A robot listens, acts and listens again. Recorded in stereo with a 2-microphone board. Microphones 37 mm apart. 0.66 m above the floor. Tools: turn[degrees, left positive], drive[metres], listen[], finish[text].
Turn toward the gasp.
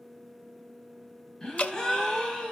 Thought: The gasp: about 15° left or 165° left.
Action: turn[15]
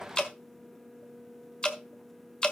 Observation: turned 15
Action: listen[]
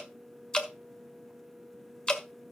Action: finish[I heard a gasp, but can't make it out now. It was about straight ahead or 150° left.]